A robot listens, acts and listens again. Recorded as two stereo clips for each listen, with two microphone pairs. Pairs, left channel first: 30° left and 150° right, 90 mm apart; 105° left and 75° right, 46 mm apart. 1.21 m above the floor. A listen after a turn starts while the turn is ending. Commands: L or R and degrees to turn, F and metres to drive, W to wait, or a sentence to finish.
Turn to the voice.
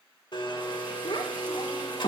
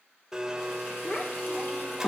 L45
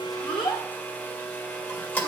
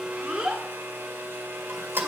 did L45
Found it: a child speaking, straight ahead, 2 to 4 m away.